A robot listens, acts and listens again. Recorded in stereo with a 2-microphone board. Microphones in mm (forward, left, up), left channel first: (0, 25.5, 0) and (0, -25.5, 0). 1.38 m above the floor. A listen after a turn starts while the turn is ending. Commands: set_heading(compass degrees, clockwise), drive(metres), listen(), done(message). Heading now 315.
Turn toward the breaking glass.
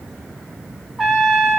listen()
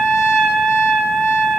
listen()
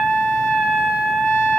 done("I can't make out breaking glass, only a trumpet.")